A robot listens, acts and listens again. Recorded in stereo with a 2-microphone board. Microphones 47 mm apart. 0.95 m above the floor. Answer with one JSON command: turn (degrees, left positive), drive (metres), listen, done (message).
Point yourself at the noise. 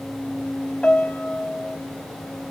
{"turn": 25}
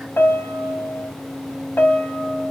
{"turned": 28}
{"turn": 125}
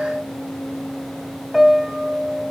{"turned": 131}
{"done": "Facing the piano, 2 to 4 m away."}